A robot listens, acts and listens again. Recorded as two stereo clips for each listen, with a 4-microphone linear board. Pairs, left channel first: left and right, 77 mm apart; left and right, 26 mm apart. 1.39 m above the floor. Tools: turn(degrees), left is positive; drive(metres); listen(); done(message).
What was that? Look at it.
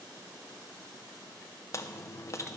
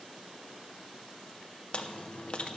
turn(degrees=40)
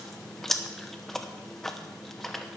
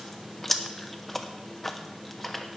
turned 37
done("Found it: chewing, straight ahead, under 1 m away.")